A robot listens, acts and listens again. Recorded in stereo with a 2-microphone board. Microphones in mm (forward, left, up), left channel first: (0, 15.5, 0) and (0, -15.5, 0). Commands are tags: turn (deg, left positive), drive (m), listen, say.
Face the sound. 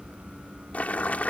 <turn deg="50"/>
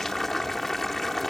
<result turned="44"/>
<say>Facing the boiling.</say>